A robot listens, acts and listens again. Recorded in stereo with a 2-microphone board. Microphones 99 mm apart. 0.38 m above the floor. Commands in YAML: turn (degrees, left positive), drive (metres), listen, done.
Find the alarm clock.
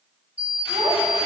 turn: -25
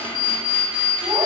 done: "Facing the alarm clock, 1 to 2 m away."